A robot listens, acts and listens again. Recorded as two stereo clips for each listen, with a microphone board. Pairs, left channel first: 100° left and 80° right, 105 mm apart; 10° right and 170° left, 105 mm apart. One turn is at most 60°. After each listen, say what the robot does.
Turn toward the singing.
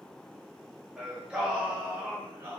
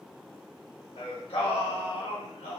Turn 15° right.
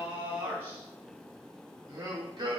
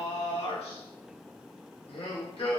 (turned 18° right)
Turn 35° right.
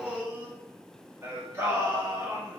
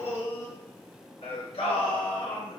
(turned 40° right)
Turn 15° right.
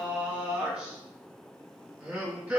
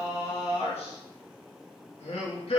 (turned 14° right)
Facing the singing.